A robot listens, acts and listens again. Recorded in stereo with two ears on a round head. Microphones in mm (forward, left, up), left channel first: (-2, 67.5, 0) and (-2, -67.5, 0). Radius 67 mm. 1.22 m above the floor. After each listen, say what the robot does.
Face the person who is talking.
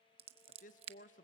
Turn 55° left.
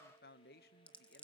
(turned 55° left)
Turn 70° left.
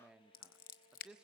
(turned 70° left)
Facing the man speaking.